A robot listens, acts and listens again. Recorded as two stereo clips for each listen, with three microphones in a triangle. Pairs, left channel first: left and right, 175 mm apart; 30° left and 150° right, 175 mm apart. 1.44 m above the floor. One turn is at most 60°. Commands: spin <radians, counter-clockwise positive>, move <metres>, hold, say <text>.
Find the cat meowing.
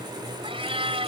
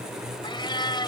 spin -0.61
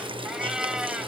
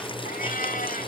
say Facing the cat meowing.